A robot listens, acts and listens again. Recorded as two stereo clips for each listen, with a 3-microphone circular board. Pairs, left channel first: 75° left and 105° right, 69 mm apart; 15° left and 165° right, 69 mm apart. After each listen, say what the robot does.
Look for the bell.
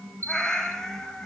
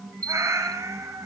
Turn 55° right.
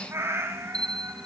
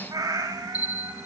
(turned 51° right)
Facing the bell.